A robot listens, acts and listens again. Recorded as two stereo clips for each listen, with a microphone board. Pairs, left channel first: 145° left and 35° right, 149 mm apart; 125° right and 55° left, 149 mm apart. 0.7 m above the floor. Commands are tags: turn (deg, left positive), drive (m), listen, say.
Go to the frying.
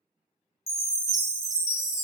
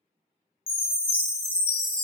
<listen/>
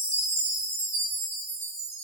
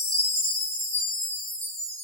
<listen/>
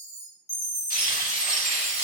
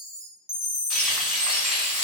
<turn deg="145"/>
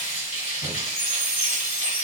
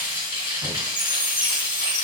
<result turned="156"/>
<turn deg="-10"/>
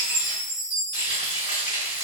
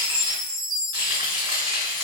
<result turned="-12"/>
<drive m="1.0"/>
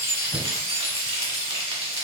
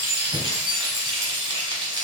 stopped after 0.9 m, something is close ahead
<say>I am next to the frying.</say>